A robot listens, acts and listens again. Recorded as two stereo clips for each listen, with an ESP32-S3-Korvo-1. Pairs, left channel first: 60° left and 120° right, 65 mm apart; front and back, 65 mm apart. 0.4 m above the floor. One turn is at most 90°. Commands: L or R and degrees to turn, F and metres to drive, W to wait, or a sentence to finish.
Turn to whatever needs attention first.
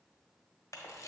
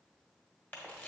W
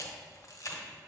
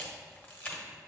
W
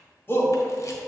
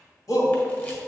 L10
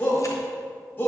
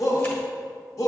Found it: a shout, straight ahead, 1 to 2 m away.